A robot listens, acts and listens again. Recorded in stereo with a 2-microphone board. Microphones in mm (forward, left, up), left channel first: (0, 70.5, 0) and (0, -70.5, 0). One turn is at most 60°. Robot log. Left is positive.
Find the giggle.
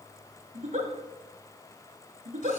note: The giggle: about 60° right or 120° right.
cmd yaw -60
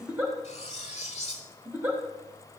note: So it is at 15° right.
cmd yaw -15
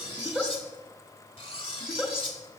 end: Facing the giggle.